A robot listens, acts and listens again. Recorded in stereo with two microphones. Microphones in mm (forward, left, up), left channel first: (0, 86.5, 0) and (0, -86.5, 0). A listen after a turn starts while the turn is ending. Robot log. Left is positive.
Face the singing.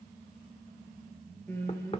cmd yaw +30
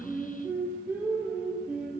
end: Found it: singing, straight ahead, over 4 m away.